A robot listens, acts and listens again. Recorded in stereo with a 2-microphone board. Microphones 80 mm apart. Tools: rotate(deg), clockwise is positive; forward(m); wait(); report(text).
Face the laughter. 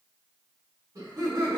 rotate(50)
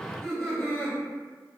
rotate(-15)
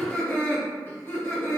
rotate(-35)
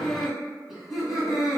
report("Facing the laughter, 2 to 4 m away.")